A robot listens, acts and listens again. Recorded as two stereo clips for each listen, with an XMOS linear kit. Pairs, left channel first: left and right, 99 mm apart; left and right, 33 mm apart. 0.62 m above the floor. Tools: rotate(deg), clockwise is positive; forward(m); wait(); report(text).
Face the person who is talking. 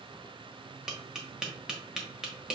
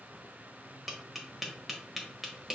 wait()
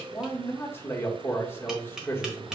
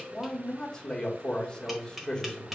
rotate(-20)
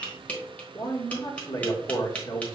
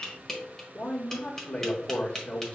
rotate(-135)
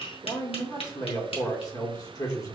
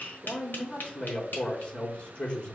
rotate(-50)
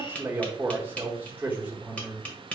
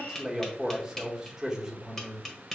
rotate(20)
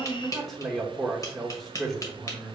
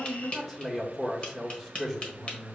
report("Found it: a man speaking, straight ahead.")